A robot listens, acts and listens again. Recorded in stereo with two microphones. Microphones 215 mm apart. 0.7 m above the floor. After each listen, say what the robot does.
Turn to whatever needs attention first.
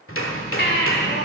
Turn 55° left.
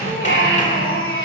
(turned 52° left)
Turn 70° left.
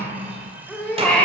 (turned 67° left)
Facing the baby crying, 2 to 4 m away.